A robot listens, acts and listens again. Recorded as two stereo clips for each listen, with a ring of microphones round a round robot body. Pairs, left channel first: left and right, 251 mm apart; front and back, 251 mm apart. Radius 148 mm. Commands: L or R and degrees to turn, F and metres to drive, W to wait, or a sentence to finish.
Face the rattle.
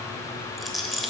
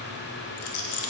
Facing the rattle.